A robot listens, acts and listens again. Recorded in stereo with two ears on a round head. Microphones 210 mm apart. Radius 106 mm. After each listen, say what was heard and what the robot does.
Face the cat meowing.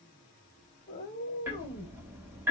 The cat meowing: about 40° left or 140° left. Turn 40° left.
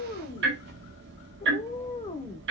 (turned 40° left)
So it is at 15° left. Turn 15° left.
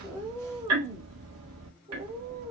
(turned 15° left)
The cat meowing is now 30° right. Turn 30° right.
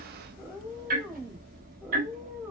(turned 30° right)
Found it: a cat meowing, straight ahead, 1 to 2 m away.